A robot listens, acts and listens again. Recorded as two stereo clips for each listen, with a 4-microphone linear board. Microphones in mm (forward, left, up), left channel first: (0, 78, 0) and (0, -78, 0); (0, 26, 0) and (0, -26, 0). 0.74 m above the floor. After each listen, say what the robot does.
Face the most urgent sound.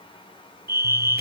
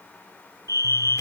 Turn 75° right.
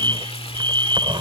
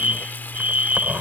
Turn 30° right.
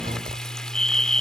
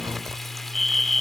Facing the fire alarm.